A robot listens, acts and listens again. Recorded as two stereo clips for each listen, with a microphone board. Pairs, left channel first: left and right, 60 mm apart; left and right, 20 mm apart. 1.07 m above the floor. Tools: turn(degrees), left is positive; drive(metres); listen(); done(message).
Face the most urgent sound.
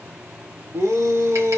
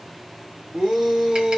turn(degrees=-65)
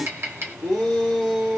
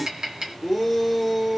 done("Facing the shout.")